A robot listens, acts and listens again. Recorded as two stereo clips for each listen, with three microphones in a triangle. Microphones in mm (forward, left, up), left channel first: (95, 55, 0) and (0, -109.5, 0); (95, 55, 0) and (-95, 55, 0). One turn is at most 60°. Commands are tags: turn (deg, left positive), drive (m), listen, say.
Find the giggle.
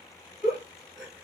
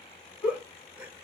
<turn deg="-60"/>
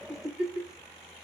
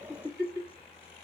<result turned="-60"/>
<turn deg="-35"/>
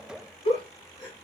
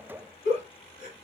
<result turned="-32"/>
<say>Found it: a giggle, straight ahead.</say>